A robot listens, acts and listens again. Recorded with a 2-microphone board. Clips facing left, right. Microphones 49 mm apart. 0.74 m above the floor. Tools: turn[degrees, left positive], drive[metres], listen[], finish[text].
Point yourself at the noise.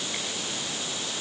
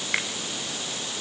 Action: turn[-90]
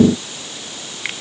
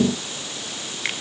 Action: finish[Facing the finger snap.]